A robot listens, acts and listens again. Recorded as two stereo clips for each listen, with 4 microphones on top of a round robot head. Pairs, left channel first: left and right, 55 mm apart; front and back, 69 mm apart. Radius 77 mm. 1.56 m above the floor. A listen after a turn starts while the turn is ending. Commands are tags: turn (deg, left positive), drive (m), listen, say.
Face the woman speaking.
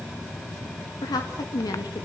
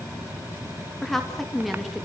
<turn deg="90"/>
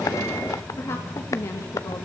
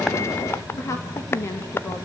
<turn deg="50"/>
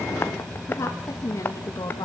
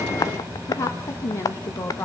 <turn deg="50"/>
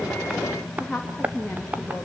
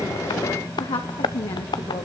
<say>Facing the woman speaking, 2 to 4 m away.</say>